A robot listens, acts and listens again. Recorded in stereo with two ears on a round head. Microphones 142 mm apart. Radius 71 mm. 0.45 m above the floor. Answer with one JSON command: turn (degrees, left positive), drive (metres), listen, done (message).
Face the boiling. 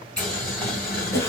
{"turn": 30}
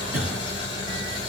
{"turn": 145}
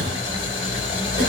{"turn": 40}
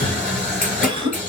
{"turn": 10}
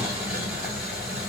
{"done": "Found it: boiling, straight ahead, 2 to 4 m away."}